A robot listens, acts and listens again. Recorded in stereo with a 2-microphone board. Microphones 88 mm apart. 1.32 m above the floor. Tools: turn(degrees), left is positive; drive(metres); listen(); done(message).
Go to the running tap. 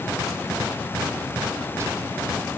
listen()
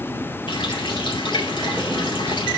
turn(degrees=65)
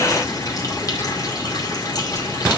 turn(degrees=45)
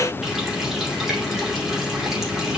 drive(metres=1.0)
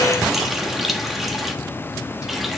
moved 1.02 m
drive(metres=1.0)
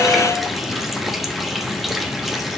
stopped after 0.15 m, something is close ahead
done("I am next to the running tap.")